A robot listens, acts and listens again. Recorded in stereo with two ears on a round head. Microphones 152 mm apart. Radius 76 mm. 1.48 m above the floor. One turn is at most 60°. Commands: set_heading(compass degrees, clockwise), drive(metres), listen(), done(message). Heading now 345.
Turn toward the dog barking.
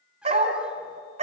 set_heading(25)
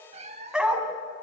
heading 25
done("Facing the dog barking, 2 to 4 m away.")